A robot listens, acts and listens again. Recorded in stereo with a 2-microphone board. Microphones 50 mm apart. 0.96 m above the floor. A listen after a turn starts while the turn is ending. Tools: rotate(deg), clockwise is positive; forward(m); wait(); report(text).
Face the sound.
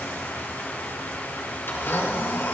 rotate(-55)
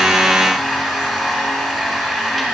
report("Found it: a blender, straight ahead.")